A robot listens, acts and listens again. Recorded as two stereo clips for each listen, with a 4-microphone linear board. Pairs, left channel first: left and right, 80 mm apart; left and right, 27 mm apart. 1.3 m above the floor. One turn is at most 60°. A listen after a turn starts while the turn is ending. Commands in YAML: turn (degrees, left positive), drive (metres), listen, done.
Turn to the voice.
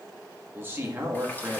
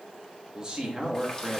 turn: -25
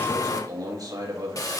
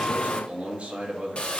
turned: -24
turn: -60
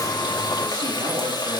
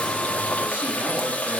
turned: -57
turn: -60
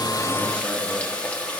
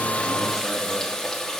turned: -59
turn: -15
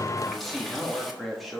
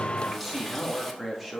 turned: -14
done: "Found it: a man speaking, straight ahead."